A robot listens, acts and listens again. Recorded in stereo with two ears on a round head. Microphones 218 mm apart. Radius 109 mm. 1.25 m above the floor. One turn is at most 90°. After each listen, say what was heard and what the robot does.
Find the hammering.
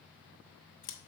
Keep listening.
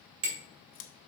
The hammering: about 60° right or 120° right. Turn 60° right.
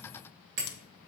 So it is at 55° right. Turn 55° right.
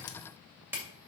The hammering is now 10° right. Turn 10° right.
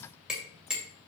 Found it: hammering, straight ahead, 2 to 4 m away.